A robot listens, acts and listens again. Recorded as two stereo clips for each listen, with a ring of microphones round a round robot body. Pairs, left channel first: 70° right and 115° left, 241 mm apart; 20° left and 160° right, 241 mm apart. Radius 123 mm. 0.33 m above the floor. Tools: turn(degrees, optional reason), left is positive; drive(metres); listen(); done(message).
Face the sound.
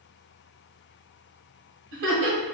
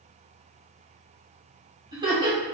turn(degrees=130, reason="The laughter: 130° left.")
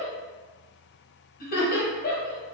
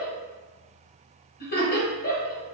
turn(degrees=-20, reason="The laughter is now 20° right.")
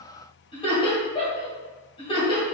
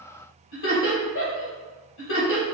done("Found it: laughter, straight ahead.")